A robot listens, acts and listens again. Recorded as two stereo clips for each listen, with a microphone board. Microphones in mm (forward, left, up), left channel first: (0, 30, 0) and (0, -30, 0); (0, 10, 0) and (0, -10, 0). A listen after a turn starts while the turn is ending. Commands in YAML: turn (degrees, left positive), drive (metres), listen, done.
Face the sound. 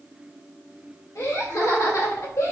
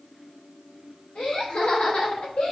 turn: 70
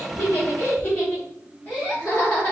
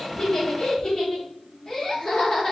turn: 35
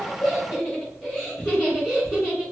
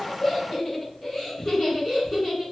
turn: 15
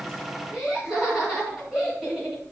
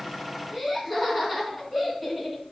done: "Facing the laughter, over 4 m away."